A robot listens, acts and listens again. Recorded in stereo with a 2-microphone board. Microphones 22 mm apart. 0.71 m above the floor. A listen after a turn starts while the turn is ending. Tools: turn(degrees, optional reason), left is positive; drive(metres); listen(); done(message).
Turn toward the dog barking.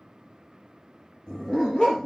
turn(degrees=40, reason="The dog barking: about 40° left or 140° left.")
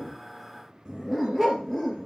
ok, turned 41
turn(degrees=10, reason="So it is at 10° left.")
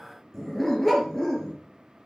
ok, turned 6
turn(degrees=10, reason="The dog barking is now 10° left.")
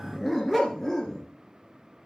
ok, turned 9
turn(degrees=15, reason="The dog barking is now 15° left.")
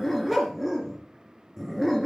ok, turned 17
done("Found it: a dog barking, straight ahead, 2 to 4 m away.")